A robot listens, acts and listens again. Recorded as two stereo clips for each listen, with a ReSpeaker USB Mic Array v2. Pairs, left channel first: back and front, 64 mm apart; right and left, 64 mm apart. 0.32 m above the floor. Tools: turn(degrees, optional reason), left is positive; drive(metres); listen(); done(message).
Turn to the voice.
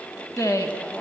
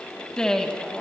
turn(degrees=-170, reason="The woman speaking: 170° right.")
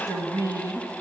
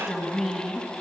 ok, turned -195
done("Found it: a woman speaking, straight ahead, 2 to 4 m away.")